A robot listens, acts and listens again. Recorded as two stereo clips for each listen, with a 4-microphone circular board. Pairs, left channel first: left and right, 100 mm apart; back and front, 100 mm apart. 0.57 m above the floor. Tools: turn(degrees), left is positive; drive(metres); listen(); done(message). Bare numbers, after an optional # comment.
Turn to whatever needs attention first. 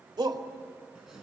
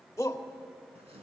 # The shout: 125° right.
turn(-125)
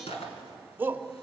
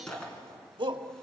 # The shout is now 25° right.
turn(-25)
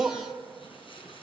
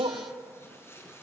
done("Found it: a shout, straight ahead, 2 to 4 m away.")